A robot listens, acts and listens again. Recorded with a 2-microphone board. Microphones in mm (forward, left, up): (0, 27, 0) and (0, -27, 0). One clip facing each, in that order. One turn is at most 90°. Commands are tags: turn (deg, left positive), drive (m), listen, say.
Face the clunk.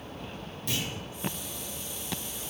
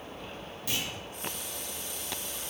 <turn deg="-30"/>
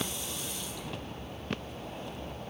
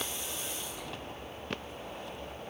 <listen/>
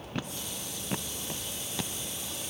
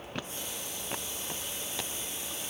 <say>I heard a clunk, but can't make it out now. It was about 25° left or 145° right.</say>